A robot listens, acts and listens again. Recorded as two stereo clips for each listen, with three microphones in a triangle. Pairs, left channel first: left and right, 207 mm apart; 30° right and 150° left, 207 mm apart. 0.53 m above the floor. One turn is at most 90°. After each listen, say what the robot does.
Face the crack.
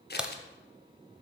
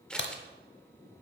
Facing the crack, under 1 m away.